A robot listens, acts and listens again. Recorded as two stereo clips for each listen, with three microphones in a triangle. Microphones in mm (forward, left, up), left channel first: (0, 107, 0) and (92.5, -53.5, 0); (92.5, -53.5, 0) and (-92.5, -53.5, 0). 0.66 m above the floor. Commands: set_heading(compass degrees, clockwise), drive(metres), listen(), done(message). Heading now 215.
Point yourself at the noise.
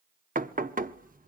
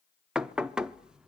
set_heading(310)
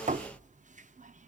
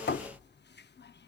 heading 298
set_heading(313)
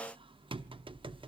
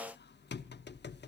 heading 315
done("Facing the knocking, under 1 m away.")